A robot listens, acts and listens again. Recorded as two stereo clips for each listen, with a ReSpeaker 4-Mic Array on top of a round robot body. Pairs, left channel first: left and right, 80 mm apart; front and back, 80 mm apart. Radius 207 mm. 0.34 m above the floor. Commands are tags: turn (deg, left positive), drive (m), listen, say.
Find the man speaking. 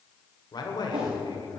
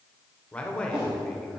<turn deg="80"/>
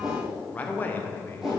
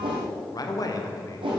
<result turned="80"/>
<turn deg="35"/>
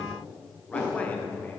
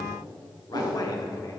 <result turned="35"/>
<turn deg="30"/>
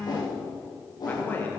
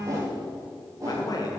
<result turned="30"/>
<turn deg="30"/>
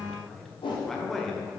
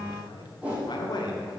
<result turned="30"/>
<say>Found it: a man speaking, straight ahead, 2 to 4 m away.</say>